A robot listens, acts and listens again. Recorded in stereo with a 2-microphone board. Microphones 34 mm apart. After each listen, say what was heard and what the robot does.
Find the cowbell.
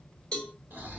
The cowbell: about 20° left or 160° left. Turn 20° left.
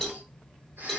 Found it: a cowbell, straight ahead, 1 to 2 m away.